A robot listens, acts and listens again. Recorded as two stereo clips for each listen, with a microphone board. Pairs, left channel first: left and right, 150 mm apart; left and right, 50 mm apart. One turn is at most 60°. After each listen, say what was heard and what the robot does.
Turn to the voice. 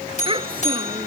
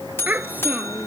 The child speaking: about 35° right or 145° right. Turn 35° right.
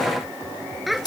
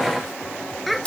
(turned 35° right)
Found it: a child speaking, straight ahead.